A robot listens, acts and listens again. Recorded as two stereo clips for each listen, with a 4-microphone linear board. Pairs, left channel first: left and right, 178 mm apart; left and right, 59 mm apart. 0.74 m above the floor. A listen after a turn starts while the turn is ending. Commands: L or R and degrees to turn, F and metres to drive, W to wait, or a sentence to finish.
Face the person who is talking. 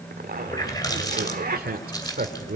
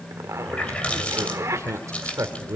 R60
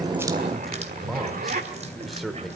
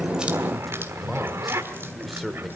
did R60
Found it: a man speaking, straight ahead, 2 to 4 m away.